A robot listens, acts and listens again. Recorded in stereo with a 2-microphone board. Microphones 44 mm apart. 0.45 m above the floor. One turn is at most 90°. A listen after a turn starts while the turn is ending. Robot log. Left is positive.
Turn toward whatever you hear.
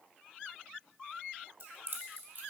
note: The keys jangling: about 60° right or 120° right.
cmd yaw -60
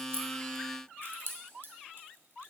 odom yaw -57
note: So it is at 55° right.
cmd yaw -55
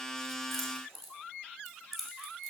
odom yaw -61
end: Facing the keys jangling.